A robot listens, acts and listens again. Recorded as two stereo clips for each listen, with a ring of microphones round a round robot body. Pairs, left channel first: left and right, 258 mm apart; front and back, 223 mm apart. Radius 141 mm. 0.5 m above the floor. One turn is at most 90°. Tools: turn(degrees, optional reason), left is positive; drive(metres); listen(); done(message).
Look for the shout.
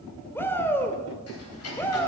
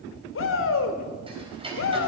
turn(degrees=10, reason="The shout: 10° left.")
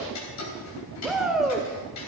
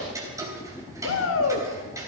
done("Found it: a shout, straight ahead.")